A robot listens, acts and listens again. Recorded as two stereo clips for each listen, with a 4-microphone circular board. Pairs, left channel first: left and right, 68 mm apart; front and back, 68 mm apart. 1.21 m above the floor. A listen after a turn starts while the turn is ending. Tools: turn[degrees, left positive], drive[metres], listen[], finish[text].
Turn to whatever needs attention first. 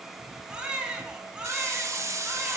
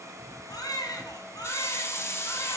Thought: The baby crying: 15° right.
Action: turn[-15]
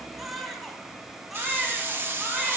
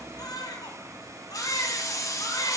Action: finish[Facing the baby crying, 2 to 4 m away.]